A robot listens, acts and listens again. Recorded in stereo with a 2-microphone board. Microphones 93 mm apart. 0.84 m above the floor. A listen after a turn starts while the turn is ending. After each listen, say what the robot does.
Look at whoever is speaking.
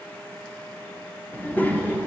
Turn 20° left.
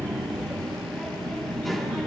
Facing the child speaking, 1 to 2 m away.